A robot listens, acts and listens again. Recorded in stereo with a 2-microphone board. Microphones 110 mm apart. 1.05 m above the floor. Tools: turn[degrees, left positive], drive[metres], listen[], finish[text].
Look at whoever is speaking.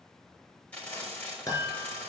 Action: listen[]
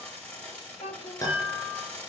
Action: turn[90]
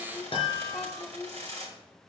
Action: finish[Facing the child speaking, 1 to 2 m away.]